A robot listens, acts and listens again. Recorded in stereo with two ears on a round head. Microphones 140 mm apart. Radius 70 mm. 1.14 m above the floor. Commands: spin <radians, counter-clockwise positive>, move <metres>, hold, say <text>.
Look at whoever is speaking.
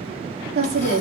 spin -1.31
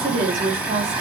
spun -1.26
spin -0.52
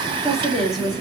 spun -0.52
say Found it: a woman speaking, straight ahead.